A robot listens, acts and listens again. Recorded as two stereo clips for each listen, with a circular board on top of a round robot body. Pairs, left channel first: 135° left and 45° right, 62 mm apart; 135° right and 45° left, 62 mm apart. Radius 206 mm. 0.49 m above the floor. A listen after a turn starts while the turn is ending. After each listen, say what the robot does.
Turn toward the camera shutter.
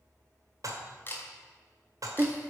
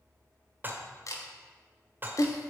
Turn 165° right.
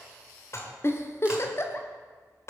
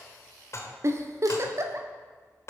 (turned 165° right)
Keep listening.
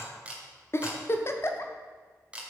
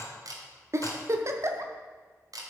Turn 30° left.
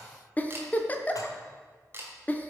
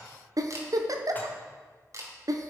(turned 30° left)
Turn 10° left.
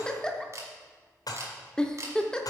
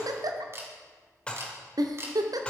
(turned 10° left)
Found it: a camera shutter, straight ahead.